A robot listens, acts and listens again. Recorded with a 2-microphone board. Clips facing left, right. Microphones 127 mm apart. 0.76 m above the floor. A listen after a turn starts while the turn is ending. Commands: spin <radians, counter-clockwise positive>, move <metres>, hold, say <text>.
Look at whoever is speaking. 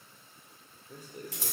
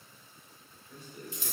spin 0.70
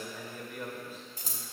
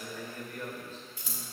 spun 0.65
spin 0.17
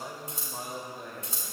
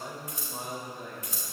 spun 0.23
say Found it: a man speaking, straight ahead.